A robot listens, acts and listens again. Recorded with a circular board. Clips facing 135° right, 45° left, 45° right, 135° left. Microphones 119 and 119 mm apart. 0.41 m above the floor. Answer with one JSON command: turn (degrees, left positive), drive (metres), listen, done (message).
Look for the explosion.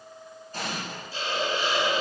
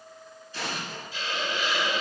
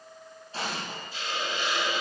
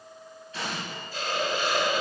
{"turn": -100}
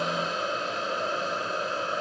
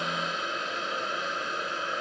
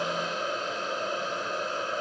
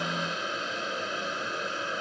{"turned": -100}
{"done": "I heard an explosion from this way, but can't make it out now."}